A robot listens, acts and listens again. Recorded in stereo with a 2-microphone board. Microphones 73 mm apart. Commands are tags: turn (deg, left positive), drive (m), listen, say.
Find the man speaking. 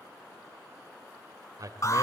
<turn deg="-55"/>
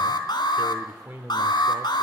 <turn deg="-25"/>
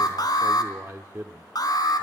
<turn deg="-35"/>
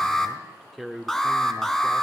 <say>Found it: a man speaking, straight ahead, 1 to 2 m away.</say>